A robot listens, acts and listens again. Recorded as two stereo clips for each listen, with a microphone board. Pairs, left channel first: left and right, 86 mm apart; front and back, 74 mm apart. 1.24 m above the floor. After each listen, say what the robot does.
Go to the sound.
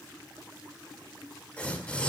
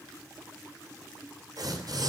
Turn 160° left.
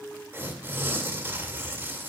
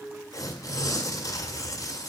Turn 35° right.
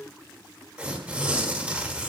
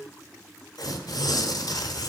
Turn 20° right.
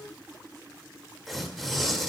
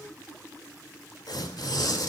Drive 1.0 m forward.
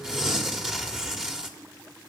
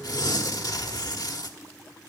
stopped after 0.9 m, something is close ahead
Turn 10° right.
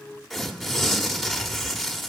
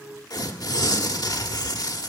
I am next to the tearing paper.